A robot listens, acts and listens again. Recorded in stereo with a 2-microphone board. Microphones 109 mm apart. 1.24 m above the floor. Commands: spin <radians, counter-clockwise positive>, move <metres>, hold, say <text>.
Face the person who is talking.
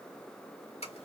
hold
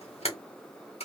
hold
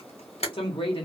spin 0.96
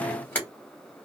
hold
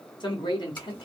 spin 0.96
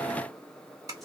hold
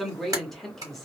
say Found it: a man speaking, straight ahead.